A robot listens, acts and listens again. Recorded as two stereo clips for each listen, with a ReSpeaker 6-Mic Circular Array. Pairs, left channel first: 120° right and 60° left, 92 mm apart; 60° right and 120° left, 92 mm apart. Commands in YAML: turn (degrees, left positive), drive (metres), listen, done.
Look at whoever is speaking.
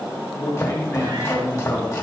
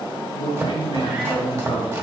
turn: -70
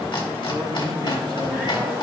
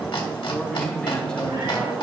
listen: true
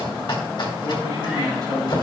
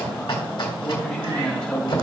turn: 20
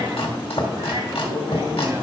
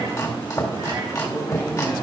listen: true
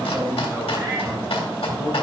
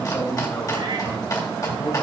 done: "Facing the man speaking."